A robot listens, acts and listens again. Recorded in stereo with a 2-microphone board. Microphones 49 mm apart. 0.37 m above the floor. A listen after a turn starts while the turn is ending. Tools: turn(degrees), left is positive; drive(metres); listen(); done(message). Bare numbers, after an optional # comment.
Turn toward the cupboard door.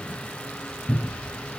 turn(-30)
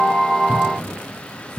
# So it is at 25° left.
turn(25)
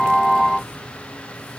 listen()
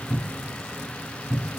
done("Found it: a cupboard door, straight ahead.")